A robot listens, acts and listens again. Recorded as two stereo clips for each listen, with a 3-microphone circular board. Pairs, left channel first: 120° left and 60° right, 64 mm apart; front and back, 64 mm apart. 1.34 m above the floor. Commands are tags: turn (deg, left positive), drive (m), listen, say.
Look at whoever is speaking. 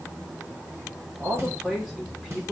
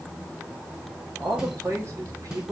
<turn deg="-145"/>
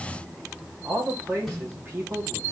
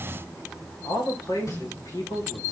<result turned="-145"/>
<turn deg="-10"/>
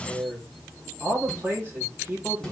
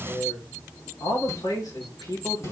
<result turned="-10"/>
<say>Facing the man speaking.</say>